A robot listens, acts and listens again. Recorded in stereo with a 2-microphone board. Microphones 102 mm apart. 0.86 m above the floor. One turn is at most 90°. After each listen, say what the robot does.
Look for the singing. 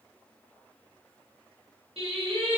Turn 65° right.
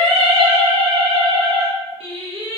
Turn 80° right.
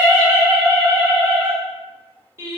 Turn 30° right.
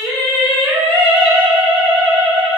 Turn 10° left.
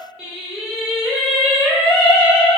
Found it: singing, straight ahead.